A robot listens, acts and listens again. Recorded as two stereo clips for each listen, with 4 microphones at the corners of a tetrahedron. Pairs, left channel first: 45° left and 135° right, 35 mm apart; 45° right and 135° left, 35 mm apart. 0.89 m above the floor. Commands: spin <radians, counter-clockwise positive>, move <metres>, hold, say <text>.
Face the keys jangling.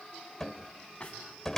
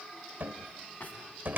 hold
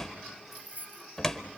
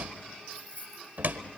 spin -1.66
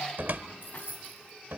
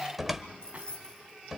spin 0.35
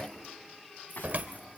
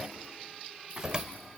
hold
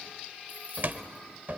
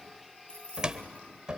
spin 0.17
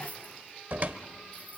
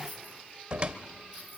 hold
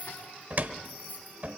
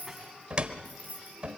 say Found it: keys jangling, straight ahead, over 4 m away.